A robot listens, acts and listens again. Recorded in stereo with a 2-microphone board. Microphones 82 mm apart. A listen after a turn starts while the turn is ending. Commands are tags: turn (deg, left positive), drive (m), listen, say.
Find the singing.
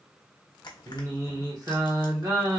<turn deg="-45"/>
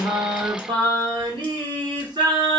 <turn deg="-85"/>
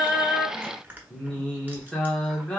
<turn deg="10"/>
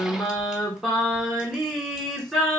<say>Facing the singing.</say>